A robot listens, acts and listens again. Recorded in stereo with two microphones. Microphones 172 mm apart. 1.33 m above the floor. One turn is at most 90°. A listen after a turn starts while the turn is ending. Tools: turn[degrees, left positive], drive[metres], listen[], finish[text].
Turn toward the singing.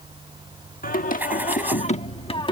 Thought: The singing: about 30° left or 150° left.
Action: turn[30]
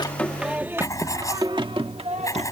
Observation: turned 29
Thought: So it is at 40° right.
Action: turn[-40]
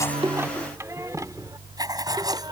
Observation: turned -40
Thought: The singing is now 20° right.
Action: turn[-20]
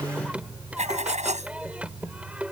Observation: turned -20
Thought: The singing is now 10° right.
Action: turn[-10]
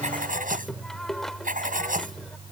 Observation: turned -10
Action: finish[Facing the singing.]